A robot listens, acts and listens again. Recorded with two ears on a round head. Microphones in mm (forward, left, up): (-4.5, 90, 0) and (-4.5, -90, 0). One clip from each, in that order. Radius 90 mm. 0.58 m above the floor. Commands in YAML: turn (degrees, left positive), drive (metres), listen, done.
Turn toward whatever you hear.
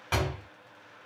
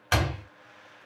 turn: -45
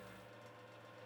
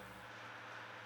listen: true
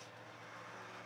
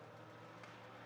done: "I heard a door slam, but can't make it out now. It was about straight ahead or 90° right."